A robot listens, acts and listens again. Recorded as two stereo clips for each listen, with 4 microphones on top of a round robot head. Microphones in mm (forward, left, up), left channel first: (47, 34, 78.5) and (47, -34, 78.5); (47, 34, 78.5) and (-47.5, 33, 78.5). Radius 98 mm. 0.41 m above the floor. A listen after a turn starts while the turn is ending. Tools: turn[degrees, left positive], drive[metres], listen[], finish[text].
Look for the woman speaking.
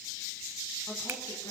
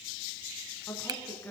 Action: listen[]
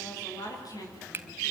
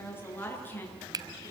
Thought: The woman speaking: 70° left.
Action: turn[70]
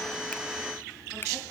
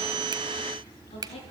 Action: listen[]
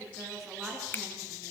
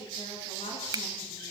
Action: listen[]
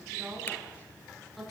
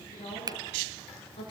Action: finish[Found it: a woman speaking, straight ahead, over 4 m away.]